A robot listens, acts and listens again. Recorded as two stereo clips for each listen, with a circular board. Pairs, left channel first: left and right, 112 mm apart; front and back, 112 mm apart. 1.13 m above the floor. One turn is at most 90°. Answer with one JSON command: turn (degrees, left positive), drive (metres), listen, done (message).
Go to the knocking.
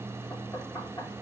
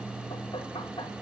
{"turn": 30}
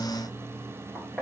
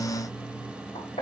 {"drive": 1.0}
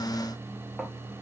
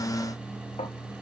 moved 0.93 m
{"listen": true}
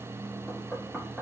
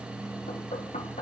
{"drive": 1.0}
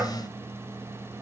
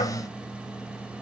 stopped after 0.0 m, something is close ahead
{"listen": true}
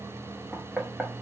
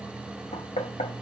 {"turn": -10}
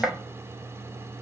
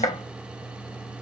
{"done": "I am next to the knocking."}